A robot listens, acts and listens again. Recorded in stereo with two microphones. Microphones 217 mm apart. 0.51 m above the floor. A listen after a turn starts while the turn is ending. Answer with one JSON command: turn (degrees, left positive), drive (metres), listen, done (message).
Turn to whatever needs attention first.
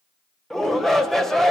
{"turn": 30}
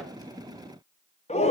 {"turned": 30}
{"turn": 145}
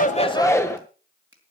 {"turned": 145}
{"turn": 15}
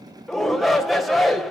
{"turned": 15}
{"done": "Facing the shout, 2 to 4 m away."}